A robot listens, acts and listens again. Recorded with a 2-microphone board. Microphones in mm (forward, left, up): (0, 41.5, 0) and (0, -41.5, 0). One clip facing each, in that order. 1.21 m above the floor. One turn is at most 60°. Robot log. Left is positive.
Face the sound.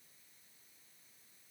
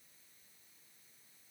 cmd idle
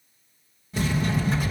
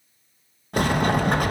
note: The sliding door: about 55° right or 125° right.
cmd yaw -55
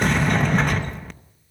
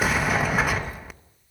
end: Facing the sliding door.